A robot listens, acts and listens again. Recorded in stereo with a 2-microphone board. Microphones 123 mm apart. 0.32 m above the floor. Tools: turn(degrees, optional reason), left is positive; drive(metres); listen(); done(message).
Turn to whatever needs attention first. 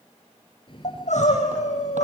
turn(degrees=75, reason="The crying: about 75° left or 105° left.")
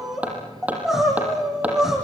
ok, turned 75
done("Facing the crying.")